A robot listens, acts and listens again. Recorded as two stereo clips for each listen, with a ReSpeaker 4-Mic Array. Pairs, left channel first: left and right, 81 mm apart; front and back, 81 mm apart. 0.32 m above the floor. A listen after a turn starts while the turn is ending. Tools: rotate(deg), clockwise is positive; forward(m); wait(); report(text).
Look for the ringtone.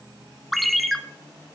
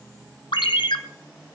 report("Facing the ringtone, 1 to 2 m away.")